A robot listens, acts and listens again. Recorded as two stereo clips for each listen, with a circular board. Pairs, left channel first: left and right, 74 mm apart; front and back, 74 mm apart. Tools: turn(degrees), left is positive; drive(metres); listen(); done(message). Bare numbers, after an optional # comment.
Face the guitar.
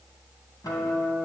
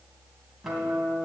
# The guitar: 95° left.
turn(95)
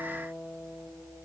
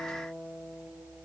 # The guitar is now 35° left.
turn(35)
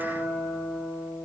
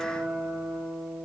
# The guitar is now 15° left.
turn(15)
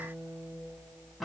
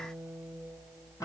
done("Facing the guitar, 2 to 4 m away.")